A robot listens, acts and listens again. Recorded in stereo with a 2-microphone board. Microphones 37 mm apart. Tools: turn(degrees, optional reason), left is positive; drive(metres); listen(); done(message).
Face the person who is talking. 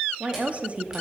turn(degrees=-35, reason="The woman speaking: about 35° right or 145° right.")
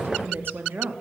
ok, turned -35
turn(degrees=-105, reason="So it is at 105° right.")
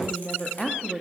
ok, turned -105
done("Facing the woman speaking, 1 to 2 m away.")